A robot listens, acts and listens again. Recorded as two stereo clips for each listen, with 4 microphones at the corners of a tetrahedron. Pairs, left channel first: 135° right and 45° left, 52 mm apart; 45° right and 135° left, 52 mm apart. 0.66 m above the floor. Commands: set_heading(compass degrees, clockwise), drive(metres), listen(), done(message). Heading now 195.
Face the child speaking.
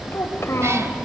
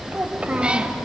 set_heading(0)
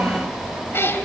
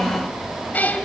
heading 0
set_heading(330)
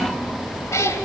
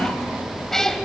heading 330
listen()
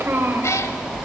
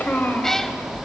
done("Found it: a child speaking, straight ahead.")